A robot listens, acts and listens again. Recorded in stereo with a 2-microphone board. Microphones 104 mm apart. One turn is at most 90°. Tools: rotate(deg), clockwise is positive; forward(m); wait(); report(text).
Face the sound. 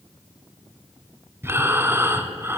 rotate(25)
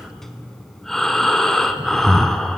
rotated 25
report("Found it: breathing, straight ahead, under 1 m away.")